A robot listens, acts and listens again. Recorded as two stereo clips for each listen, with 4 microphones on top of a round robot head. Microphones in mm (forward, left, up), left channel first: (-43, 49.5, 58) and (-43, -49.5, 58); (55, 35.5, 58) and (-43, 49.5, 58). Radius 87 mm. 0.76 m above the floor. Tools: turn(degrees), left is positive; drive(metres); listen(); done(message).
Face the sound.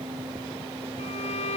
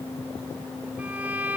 turn(degrees=100)
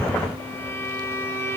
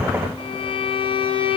turn(degrees=20)
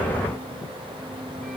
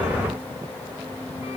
listen()
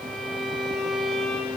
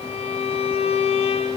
done("Facing the violin.")